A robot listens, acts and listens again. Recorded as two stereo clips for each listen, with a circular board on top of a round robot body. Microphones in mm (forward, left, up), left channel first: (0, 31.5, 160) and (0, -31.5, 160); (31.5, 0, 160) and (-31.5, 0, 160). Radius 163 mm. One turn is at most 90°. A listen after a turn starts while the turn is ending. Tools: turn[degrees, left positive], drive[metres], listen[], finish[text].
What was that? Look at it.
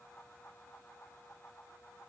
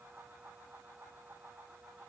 Action: listen[]
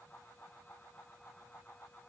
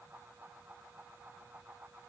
Action: listen[]
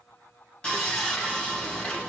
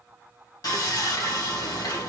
Thought: The sawing: 15° left.
Action: turn[15]
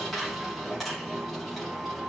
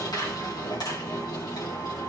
Action: finish[Found it: sawing, straight ahead.]